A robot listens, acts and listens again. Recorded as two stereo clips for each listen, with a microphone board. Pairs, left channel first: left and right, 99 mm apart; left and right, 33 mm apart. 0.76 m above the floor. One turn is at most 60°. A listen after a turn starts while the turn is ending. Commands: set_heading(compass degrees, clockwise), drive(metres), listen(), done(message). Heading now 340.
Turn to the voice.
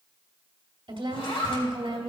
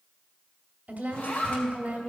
set_heading(35)
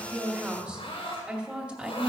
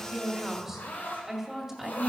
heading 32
set_heading(47)
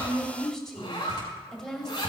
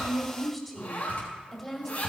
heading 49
done("Facing the woman speaking, 1 to 2 m away.")